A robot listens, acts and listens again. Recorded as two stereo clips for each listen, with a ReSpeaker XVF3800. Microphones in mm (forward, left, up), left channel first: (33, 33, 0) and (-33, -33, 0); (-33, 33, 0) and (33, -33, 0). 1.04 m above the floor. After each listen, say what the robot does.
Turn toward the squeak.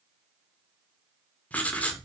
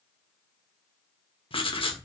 Keep listening.
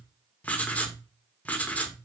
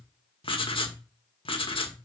Keep listening.
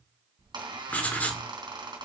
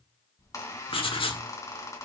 Turn 170° right.
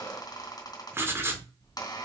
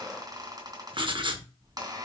Facing the squeak.